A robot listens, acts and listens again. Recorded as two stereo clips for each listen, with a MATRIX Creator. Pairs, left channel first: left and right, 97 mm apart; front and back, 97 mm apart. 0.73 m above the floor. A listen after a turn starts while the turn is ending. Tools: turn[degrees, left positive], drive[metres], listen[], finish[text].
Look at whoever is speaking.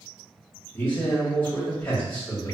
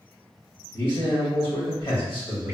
Thought: The man speaking: 25° left.
Action: turn[25]
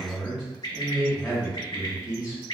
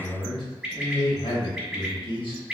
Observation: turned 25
Thought: The man speaking is now 10° right.
Action: turn[-10]
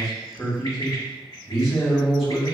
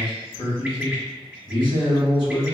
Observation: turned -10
Action: finish[Found it: a man speaking, straight ahead.]